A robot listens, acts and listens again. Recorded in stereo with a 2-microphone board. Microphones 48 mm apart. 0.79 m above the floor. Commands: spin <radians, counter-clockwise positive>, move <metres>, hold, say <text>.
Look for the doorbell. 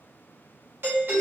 spin -0.79
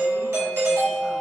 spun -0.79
spin -1.40
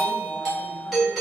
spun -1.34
say Facing the doorbell.